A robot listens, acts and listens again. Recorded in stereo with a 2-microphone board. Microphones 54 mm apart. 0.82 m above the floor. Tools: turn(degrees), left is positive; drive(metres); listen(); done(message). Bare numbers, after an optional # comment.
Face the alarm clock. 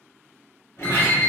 # The alarm clock: about 65° left or 115° left.
turn(65)
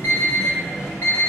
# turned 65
# So it is at 50° left.
turn(50)
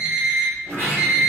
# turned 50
# The alarm clock is now 10° right.
turn(-10)
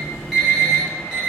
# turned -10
done("Facing the alarm clock.")